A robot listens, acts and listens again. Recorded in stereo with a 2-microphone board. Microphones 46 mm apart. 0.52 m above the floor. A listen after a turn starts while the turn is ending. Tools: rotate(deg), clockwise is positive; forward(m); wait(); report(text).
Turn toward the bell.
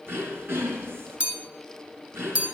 rotate(30)
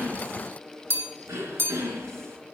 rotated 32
rotate(120)
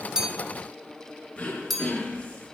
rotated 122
report("Found it: a bell, straight ahead.")